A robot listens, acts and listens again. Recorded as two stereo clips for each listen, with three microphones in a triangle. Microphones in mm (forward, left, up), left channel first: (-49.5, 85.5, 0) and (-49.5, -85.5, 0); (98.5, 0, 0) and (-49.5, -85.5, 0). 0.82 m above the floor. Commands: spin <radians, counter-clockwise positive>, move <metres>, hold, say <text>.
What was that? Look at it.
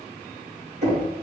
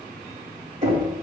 spin -1.92
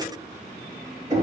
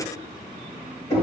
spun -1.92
spin -0.44
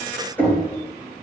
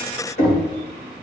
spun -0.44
spin 0.17
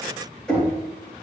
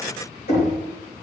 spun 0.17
say Facing the knocking, 2 to 4 m away.